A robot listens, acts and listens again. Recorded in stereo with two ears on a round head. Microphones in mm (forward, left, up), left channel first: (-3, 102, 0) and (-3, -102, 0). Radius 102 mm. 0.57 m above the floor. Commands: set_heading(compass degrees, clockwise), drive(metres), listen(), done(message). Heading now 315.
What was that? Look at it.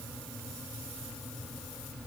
listen()
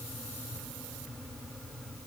listen()
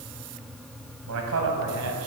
set_heading(25)
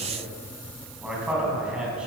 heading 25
done("Found it: a man speaking, straight ahead, over 4 m away.")